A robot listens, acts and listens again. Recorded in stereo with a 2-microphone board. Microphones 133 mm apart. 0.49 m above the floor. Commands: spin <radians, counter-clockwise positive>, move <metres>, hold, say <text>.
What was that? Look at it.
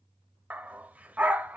spin -0.52
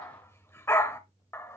spin 0.35
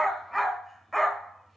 say Found it: a dog barking, straight ahead.